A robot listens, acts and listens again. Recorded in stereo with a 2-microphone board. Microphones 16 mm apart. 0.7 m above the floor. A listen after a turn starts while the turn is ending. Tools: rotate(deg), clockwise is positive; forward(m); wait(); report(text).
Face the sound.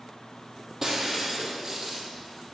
rotate(20)
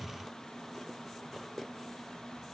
wait()
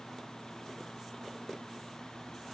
report("I heard breaking glass, but can't make it out now. It was about straight ahead or 140° right.")